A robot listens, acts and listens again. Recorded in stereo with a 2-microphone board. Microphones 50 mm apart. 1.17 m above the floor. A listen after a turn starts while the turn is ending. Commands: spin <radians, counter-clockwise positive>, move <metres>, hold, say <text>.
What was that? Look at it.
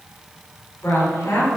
spin 1.22
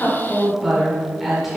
say Facing the woman speaking, over 4 m away.